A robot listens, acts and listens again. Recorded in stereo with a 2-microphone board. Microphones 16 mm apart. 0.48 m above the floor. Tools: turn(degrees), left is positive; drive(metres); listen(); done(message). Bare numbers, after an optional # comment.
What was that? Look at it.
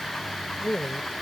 # The woman speaking: about 20° left or 160° left.
turn(20)
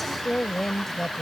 # The woman speaking: about 20° left or 160° left.
turn(20)
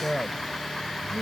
turn(30)
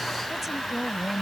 # So it is at 10° right.
turn(-10)
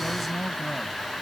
done("Facing the woman speaking.")